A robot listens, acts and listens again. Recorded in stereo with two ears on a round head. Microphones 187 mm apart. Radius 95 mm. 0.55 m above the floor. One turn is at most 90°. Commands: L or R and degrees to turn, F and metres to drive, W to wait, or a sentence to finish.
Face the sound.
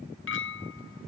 L65
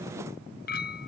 L45
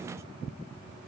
W
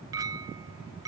R15
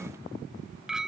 Found it: a clink, straight ahead.